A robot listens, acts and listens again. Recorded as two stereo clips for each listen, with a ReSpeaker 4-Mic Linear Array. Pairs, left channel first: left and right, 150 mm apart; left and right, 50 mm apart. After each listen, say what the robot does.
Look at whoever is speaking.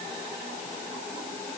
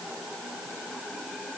Keep listening.
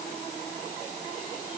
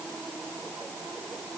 Keep listening.
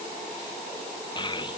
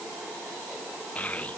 Turn 30° left.
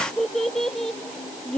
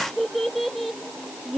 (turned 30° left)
Facing the child speaking, 1 to 2 m away.